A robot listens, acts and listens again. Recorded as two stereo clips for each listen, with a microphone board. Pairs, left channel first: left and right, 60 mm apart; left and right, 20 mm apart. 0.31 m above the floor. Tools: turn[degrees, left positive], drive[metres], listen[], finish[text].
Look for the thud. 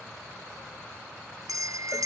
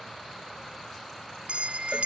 Action: listen[]
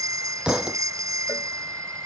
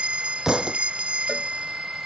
Action: turn[-30]
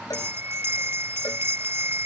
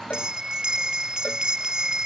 Action: listen[]
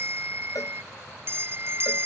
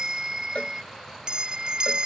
Action: finish[I heard a thud, but can't make it out now. It was about 15° left or 135° right.]